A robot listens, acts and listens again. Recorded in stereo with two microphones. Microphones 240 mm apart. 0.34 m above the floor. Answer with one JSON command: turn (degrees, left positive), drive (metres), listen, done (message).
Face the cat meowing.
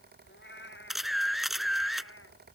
{"turn": 50}
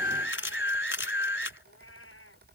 {"turn": 55}
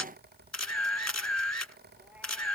{"listen": true}
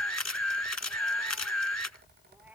{"listen": true}
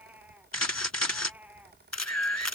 {"done": "Facing the cat meowing."}